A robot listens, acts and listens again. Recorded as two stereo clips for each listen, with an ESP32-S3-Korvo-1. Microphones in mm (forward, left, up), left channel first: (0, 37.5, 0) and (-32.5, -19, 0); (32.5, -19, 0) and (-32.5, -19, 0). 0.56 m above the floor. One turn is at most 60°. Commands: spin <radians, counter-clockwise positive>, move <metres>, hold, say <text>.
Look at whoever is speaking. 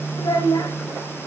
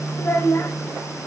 spin 0.87
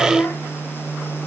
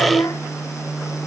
say Found it: a child speaking, straight ahead, 2 to 4 m away.